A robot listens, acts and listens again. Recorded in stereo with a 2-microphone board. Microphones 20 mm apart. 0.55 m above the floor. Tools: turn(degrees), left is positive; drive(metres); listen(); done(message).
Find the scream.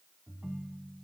listen()
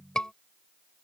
turn(degrees=50)
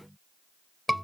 done("Facing the scream.")